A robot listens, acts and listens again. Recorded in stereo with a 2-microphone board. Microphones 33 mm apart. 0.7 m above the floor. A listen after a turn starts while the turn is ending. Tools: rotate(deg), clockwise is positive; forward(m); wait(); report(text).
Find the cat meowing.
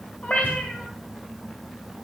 rotate(-45)
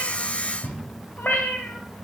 rotate(-85)
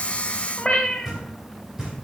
rotate(-30)
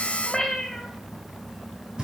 rotate(-10)
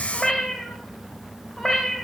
report("Found it: a cat meowing, straight ahead.")